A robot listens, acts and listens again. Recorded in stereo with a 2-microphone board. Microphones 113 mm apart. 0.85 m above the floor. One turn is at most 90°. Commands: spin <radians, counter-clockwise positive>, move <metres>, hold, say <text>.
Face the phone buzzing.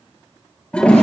hold
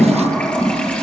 hold
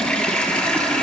say I can't make out a phone buzzing to turn to.